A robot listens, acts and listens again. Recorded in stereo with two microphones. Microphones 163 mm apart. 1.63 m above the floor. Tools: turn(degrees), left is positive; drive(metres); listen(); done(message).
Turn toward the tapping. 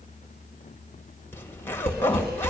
turn(degrees=-35)
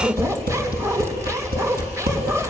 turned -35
turn(degrees=-105)
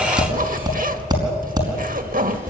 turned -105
turn(degrees=-25)
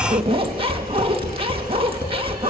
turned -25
turn(degrees=15)
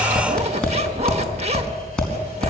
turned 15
done("Found it: tapping, straight ahead.")